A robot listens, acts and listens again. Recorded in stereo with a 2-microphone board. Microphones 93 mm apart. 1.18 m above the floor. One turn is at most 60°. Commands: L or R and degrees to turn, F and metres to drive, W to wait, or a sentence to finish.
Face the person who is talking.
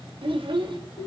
R60
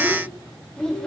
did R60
L10
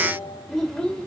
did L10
L10
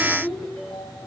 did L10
Found it: a child speaking, straight ahead, 2 to 4 m away.